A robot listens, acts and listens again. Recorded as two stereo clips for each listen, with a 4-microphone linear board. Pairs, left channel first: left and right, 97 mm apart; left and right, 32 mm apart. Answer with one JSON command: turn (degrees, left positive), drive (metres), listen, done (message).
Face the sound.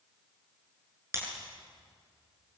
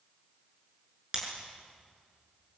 {"turn": -30}
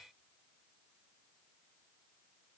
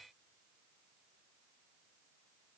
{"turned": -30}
{"listen": true}
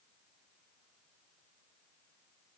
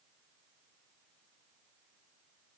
{"done": "I heard breaking glass, but can't make it out now. It was about straight ahead or 120° right."}